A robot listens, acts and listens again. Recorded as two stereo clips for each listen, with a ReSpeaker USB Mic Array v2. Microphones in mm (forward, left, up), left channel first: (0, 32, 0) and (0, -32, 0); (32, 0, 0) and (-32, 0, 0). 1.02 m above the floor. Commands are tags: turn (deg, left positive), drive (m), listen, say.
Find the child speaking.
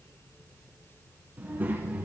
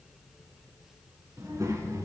<turn deg="-150"/>
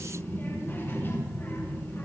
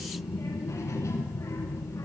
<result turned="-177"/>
<turn deg="40"/>
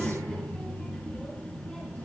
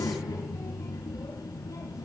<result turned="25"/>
<turn deg="15"/>
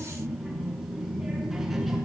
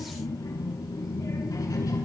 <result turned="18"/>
<say>Found it: a child speaking, straight ahead, over 4 m away.</say>